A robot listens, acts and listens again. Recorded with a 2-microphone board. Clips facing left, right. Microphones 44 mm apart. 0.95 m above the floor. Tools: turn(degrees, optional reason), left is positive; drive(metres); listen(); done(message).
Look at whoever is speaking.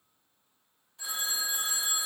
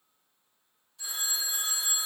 listen()
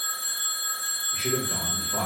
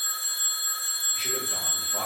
turn(degrees=60, reason="The man speaking: about 60° left or 120° left.")
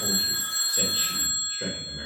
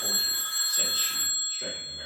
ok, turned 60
turn(degrees=30, reason="So it is at 30° left.")
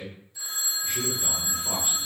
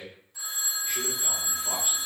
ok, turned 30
done("Facing the man speaking, 1 to 2 m away.")